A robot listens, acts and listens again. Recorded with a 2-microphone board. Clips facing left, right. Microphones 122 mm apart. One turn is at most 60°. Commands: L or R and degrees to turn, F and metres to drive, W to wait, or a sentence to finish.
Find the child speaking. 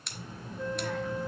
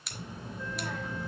R20
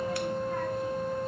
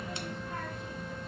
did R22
W
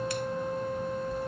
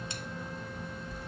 Facing the child speaking.